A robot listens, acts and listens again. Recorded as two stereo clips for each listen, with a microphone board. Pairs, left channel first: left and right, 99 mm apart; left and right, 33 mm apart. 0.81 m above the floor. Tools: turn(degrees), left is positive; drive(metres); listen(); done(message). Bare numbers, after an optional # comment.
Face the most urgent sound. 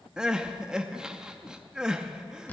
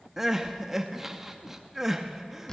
turn(-30)
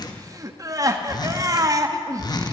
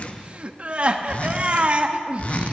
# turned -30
# So it is at 140° right.
turn(-140)
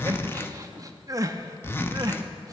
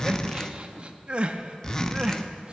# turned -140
# The crying is now 40° right.
turn(-40)
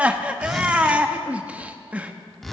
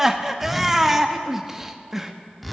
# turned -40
# The crying is now 15° right.
turn(-15)
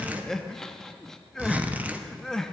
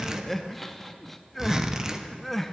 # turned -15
done("Found it: crying, straight ahead.")